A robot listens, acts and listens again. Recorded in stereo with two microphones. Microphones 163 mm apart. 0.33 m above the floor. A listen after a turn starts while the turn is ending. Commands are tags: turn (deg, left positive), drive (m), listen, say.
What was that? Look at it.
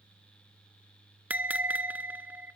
<turn deg="-30"/>
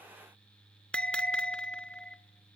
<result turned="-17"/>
<say>Facing the bell.</say>